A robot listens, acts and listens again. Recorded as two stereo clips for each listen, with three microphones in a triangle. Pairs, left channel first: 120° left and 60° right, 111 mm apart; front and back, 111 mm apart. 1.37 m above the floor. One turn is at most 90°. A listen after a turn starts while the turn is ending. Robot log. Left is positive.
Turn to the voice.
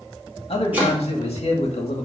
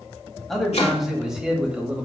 note: The man speaking: 100° left.
cmd yaw +90
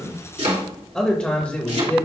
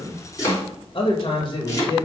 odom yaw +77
note: The man speaking is now 50° left.
cmd yaw +50
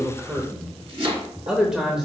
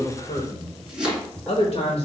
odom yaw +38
note: The man speaking is now 40° left.
cmd yaw +40
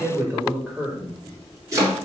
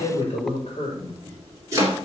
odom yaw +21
note: The man speaking is now 25° left.
cmd yaw +25
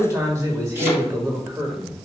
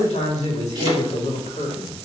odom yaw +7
note: The man speaking is now 15° left.
cmd yaw +15
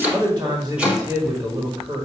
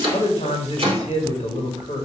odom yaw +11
end: Found it: a man speaking, straight ahead.